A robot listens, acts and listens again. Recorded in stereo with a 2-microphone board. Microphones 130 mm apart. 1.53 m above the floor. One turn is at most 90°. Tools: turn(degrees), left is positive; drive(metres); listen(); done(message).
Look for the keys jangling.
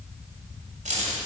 turn(degrees=-65)
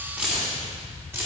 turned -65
turn(degrees=-20)
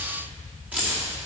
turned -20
turn(degrees=-15)
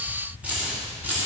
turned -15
turn(degrees=-15)
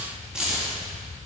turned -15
done("Found it: keys jangling, straight ahead, 2 to 4 m away.")